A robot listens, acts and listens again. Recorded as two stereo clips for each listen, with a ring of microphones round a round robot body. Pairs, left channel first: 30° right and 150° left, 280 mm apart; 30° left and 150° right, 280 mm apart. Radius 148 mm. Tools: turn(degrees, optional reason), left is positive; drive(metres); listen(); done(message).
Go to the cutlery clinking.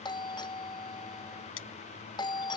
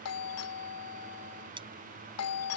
turn(degrees=-75, reason="The cutlery clinking: 75° right.")
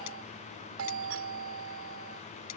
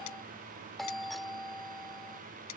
listen()
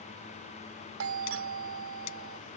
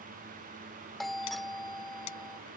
listen()
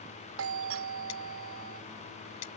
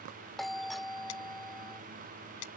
drive(metres=1.0)
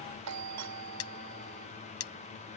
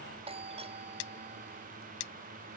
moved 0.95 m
turn(degrees=10, reason="The cutlery clinking is now 10° left.")
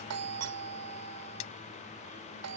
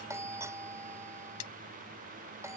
drive(metres=1.0)
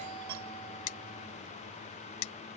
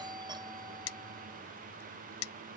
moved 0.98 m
turn(degrees=-10, reason="The cutlery clinking is now 10° right.")
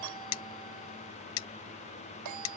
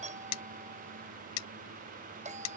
drive(metres=1.0)
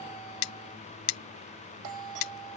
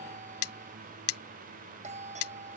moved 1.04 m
drive(metres=1.0)
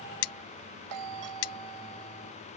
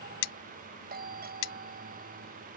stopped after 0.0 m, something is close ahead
done("I am next to the cutlery clinking.")